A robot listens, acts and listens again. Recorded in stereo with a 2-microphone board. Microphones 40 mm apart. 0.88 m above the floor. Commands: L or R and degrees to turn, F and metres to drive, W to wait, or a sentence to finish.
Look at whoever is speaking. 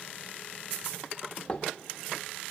W
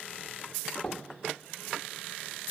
W
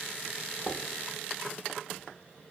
I can't make out anyone speaking to turn to.